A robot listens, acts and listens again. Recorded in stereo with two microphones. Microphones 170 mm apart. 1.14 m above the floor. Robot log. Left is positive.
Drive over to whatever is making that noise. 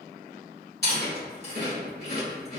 note: The chewing: about 70° left or 110° left.
cmd yaw +70
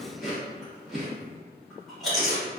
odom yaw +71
cmd fwd 1.0
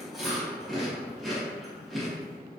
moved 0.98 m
cmd fwd 1.0
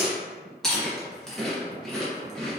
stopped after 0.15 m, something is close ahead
end: Arrived at the chewing, straight ahead.